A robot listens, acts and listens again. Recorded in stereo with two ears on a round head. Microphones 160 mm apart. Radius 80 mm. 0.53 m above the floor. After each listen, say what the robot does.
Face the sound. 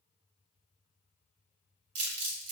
Turn 90° right.
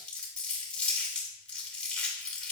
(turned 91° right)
Found it: crumpling, straight ahead.